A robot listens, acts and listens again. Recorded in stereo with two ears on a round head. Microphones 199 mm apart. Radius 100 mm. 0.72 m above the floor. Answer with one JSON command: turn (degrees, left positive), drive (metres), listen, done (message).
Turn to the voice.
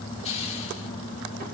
{"listen": true}
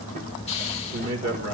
{"turn": -60}
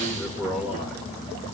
{"done": "Facing the man speaking, 1 to 2 m away."}